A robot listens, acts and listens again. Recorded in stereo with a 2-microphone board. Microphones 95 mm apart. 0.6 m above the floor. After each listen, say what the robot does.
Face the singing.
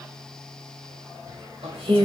Turn 60° right.
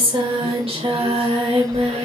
Turn 75° right.
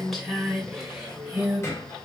Turn 10° right.
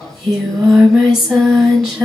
Facing the singing.